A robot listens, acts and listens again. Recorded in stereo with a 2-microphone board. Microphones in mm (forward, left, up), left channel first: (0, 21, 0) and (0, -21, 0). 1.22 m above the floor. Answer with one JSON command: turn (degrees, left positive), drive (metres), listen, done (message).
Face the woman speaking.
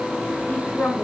{"turn": 55}
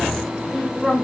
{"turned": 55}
{"done": "Found it: a woman speaking, straight ahead."}